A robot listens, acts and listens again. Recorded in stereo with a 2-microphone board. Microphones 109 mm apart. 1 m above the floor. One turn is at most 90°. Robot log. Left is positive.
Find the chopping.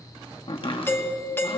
note: The chopping: about 55° left or 125° left.
cmd yaw +55
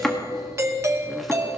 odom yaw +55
end: Facing the chopping.